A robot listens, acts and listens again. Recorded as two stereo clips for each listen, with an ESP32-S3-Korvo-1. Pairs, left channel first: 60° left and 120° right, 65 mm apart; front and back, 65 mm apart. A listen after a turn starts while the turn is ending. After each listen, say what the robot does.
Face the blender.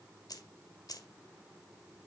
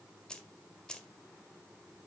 Keep listening.
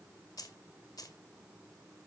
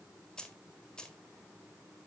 Keep listening.
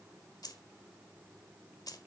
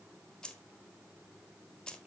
I can't make out a blender, only keys jangling.